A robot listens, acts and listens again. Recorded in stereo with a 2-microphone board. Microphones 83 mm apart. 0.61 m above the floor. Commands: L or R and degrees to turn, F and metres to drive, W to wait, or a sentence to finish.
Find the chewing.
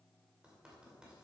W
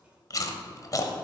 L45
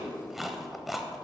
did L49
Facing the chewing.